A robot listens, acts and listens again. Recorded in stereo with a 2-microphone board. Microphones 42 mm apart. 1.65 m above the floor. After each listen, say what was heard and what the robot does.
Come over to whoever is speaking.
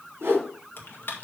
Keep listening.
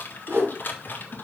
Keep listening.
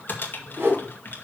I can't make out anyone speaking to turn to.